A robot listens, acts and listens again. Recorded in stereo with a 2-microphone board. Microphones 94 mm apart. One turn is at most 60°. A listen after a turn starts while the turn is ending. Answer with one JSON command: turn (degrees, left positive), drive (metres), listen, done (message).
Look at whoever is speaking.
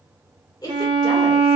{"turn": 50}
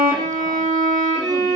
{"listen": true}
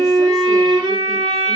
{"listen": true}
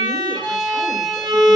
{"done": "I heard a woman speaking, but can't make it out now. It was about straight ahead or 80° left."}